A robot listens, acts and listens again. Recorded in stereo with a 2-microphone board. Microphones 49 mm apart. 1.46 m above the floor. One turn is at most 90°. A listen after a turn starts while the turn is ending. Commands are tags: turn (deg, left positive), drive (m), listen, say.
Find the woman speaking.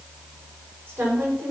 <turn deg="-45"/>
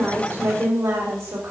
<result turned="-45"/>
<turn deg="-85"/>
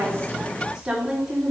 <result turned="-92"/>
<turn deg="-15"/>
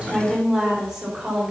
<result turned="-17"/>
<turn deg="-10"/>
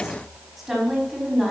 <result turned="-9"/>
<say>Facing the woman speaking.</say>